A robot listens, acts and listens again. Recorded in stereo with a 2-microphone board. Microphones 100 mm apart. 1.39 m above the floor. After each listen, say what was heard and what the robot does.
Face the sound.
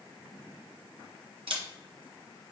The camera shutter: about 65° right or 115° right. Turn 65° right.
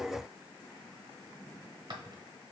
So it is at 45° right. Turn 45° right.
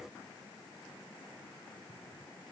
Keep listening.
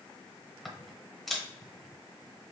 Found it: a camera shutter, straight ahead.